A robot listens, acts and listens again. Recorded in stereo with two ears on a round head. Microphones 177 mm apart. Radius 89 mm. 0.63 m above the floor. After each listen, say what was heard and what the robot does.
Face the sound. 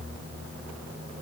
Keep listening.
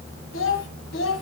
The child speaking: about 70° left or 110° left. Turn 70° left.
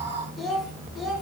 Found it: a child speaking, straight ahead, 2 to 4 m away.